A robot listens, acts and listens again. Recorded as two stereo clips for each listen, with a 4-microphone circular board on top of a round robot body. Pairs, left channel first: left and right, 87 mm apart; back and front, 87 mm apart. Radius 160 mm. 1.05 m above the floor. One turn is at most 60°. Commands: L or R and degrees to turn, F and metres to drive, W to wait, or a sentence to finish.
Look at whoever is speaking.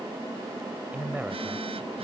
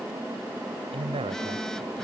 R15
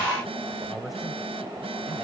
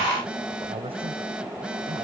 Facing the man speaking.